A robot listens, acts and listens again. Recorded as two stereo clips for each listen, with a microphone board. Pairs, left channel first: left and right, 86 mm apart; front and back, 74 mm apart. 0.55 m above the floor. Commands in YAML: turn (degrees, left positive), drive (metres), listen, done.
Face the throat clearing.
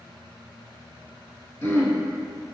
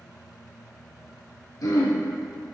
turn: 30
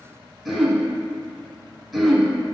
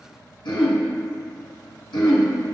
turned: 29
done: "Facing the throat clearing, under 1 m away."